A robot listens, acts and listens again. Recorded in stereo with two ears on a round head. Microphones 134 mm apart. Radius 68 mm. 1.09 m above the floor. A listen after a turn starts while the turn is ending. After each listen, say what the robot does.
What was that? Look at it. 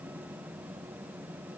Keep listening.
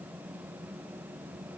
Keep listening.
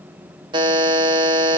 Turn 30° right.
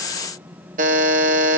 Turn 120° right.
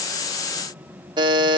Turn 30° right.
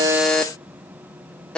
Found it: a buzzer, straight ahead.